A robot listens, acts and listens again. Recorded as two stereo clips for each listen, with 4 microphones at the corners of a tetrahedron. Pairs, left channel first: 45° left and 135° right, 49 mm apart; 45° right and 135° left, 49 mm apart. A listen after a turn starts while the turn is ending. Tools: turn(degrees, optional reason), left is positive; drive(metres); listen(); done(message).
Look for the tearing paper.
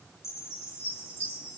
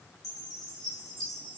listen()
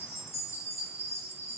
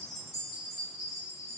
listen()
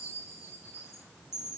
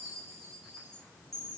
done("I can't make out tearing paper to turn to.")